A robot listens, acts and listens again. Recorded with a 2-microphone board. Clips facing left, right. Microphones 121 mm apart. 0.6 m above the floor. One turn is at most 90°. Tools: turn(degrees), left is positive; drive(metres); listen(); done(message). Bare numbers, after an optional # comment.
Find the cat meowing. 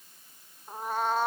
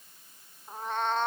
turn(30)
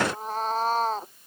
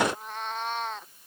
# So it is at 145° left.
turn(90)
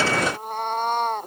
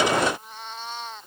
# The cat meowing is now 55° left.
turn(55)
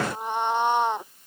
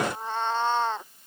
# The cat meowing is now 15° left.
turn(15)
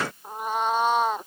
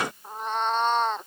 # The cat meowing is now 10° left.
turn(10)
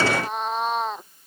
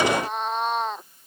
done("Found it: a cat meowing, straight ahead.")